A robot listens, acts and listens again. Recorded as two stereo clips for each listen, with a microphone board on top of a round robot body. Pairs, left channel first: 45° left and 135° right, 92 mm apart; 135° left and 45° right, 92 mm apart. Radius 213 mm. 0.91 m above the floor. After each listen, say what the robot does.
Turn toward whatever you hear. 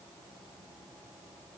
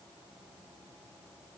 Keep listening.
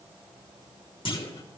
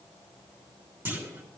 Turn 25° left.
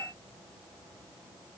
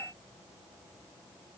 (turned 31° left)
Turn 10° right.
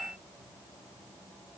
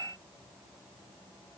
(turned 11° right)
Facing where the clunk came from. I can't hear it now.